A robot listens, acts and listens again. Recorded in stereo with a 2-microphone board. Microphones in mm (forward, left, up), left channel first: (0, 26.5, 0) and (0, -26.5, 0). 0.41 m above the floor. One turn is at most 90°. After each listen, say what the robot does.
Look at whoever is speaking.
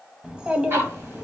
Turn 20° right.
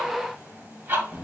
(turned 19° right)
Facing the child speaking.